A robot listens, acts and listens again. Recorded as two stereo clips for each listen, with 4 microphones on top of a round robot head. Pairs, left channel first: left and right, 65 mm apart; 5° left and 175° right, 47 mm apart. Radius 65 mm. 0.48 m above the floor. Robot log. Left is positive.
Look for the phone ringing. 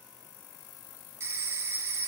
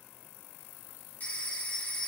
note: The phone ringing: 45° right.
cmd yaw -45
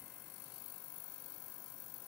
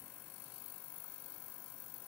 cmd idle
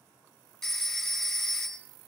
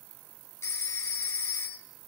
end: Facing the phone ringing, 2 to 4 m away.